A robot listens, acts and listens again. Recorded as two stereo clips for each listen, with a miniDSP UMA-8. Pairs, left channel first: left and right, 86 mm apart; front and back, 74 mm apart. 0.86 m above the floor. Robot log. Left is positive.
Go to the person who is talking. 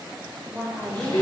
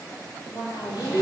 note: The woman speaking: 25° right.
cmd yaw -25
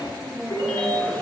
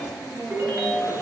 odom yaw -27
cmd fwd 1.0
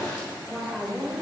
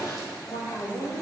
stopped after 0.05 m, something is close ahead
end: Blocked. The woman speaking is further on, straight ahead.